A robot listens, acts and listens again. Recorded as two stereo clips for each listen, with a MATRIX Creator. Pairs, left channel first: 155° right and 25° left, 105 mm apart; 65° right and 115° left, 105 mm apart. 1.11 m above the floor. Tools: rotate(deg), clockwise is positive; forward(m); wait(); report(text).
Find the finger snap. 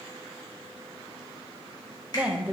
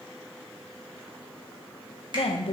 rotate(-155)
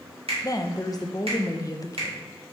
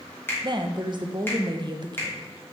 report("Facing the finger snap.")